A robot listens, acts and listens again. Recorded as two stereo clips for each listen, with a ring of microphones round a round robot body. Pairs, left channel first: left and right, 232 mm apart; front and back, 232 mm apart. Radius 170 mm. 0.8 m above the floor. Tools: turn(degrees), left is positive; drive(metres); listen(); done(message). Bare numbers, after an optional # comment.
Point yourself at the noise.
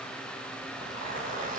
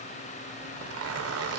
# The zipper: 165° left.
turn(165)
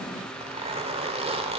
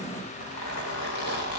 # The zipper is now 25° right.
turn(-25)
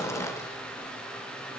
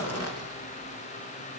# The zipper is now 10° left.
turn(10)
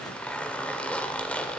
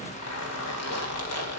done("Found it: a zipper, straight ahead, 1 to 2 m away.")